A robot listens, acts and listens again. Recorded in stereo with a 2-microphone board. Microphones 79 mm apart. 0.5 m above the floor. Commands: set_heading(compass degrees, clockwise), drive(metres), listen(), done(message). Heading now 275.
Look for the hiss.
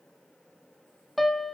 listen()
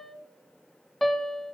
listen()
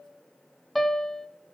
done("I can't make out a hiss to turn to.")